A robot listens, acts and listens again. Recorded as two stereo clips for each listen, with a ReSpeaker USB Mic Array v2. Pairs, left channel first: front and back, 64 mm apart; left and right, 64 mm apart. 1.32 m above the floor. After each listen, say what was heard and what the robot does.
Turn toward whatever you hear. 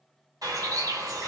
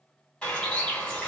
The bird: 165° left. Turn 165° left.
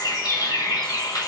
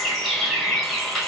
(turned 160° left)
Facing the bird.